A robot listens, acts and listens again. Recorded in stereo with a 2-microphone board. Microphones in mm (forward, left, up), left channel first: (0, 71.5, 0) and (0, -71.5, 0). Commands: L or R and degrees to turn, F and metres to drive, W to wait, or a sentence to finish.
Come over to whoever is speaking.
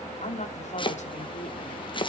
L55
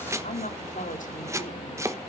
L65
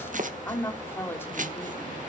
L15
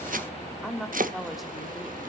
F1.0
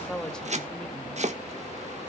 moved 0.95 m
F1.0
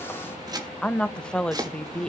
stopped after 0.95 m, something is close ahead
Arrived at the woman speaking, straight ahead.